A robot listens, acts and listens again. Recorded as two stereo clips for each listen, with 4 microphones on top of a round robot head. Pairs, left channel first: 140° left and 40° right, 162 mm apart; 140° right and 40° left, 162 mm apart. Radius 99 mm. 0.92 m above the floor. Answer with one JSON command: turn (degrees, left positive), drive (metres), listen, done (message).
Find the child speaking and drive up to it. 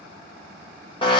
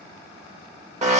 {"listen": true}
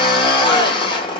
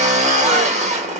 {"listen": true}
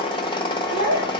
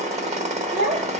{"turn": -10}
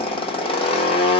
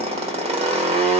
{"listen": true}
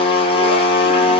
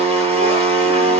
{"listen": true}
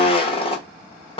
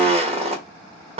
{"done": "Facing where the child speaking came from. I can't hear it now. I did not reach it."}